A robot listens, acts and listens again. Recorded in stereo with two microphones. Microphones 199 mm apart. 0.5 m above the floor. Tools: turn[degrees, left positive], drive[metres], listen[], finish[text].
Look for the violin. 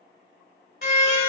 Thought: The violin: about 50° left or 130° left.
Action: turn[50]
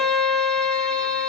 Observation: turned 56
Action: finish[Facing the violin, under 1 m away.]